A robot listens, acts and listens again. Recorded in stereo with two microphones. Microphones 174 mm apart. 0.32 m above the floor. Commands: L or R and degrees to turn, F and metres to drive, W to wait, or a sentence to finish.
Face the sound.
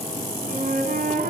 R55
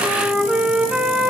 Facing the flute.